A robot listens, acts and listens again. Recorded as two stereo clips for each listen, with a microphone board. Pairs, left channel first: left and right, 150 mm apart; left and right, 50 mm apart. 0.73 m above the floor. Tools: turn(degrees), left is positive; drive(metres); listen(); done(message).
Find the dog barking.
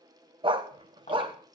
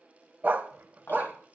turn(degrees=-35)
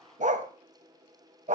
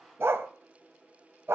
turn(degrees=-105)
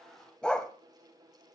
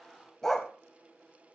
turn(degrees=10)
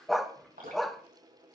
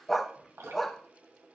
done("Found it: a dog barking, straight ahead, under 1 m away.")